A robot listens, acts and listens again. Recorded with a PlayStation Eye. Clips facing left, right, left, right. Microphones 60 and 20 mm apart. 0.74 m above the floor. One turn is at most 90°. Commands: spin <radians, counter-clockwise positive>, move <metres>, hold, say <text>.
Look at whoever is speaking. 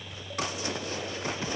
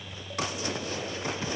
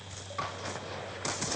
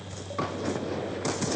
hold
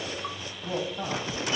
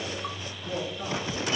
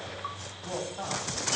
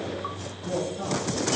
spin 1.13
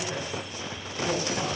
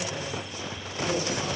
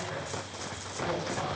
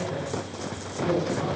spin 0.87
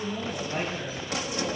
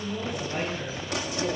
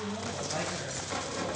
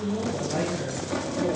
say Found it: a woman speaking, straight ahead.